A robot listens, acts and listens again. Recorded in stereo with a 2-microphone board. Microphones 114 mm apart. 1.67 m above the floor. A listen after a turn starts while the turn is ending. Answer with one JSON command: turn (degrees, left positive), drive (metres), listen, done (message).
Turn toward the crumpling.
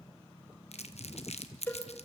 {"turn": 70}
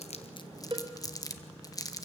{"turn": 35}
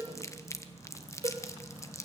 {"turn": 30}
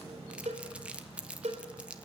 {"turn": -10}
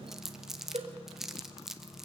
{"done": "Facing the crumpling."}